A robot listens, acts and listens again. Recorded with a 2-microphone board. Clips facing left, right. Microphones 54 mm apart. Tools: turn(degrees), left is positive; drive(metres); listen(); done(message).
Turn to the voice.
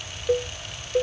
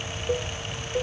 listen()
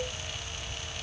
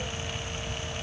listen()
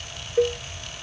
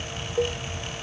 done("I can't make out anyone speaking to turn to.")